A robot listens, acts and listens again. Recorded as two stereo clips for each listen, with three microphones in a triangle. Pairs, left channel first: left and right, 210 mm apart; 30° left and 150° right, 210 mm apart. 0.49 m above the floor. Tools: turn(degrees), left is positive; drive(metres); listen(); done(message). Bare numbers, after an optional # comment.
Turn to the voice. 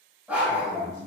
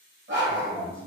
# The man speaking: 50° right.
turn(-50)
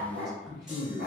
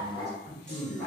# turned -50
done("Facing the man speaking.")